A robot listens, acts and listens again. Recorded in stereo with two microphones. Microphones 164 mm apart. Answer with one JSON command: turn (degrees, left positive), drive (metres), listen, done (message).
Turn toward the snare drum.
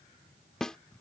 {"turn": 30}
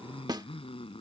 {"turn": -25}
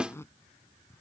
{"done": "Found it: a snare drum, straight ahead."}